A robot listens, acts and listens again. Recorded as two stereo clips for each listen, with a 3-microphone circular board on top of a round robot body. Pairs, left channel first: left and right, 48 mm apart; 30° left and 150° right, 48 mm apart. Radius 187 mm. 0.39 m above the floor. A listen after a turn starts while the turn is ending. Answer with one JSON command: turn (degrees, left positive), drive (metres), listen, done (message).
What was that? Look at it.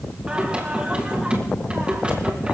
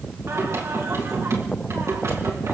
{"turn": -155}
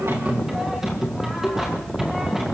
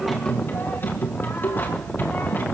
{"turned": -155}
{"turn": -10}
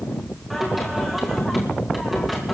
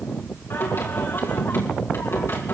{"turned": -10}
{"done": "Facing the singing, over 4 m away."}